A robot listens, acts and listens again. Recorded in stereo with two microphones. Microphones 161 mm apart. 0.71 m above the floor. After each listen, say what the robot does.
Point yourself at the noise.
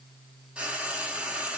Turn 30° right.
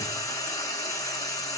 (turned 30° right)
Turn 25° left.
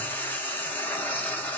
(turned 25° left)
Turn 10° left.
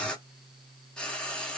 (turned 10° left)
Found it: frying, straight ahead.